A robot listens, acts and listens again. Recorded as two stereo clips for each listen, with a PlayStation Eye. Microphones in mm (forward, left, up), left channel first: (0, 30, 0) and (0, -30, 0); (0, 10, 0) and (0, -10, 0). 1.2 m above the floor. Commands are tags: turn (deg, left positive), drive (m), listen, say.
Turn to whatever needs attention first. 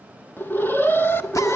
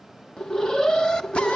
<turn deg="35"/>
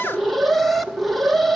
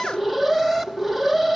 <say>Found it: an alarm, straight ahead.</say>